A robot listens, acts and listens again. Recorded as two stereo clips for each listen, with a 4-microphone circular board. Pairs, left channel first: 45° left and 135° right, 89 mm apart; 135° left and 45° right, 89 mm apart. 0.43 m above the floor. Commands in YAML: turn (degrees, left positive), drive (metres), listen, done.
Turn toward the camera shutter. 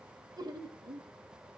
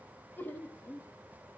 listen: true
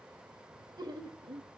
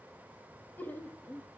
listen: true
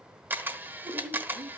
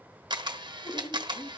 turn: -70
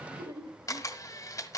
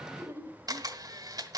done: "Facing the camera shutter, 1 to 2 m away."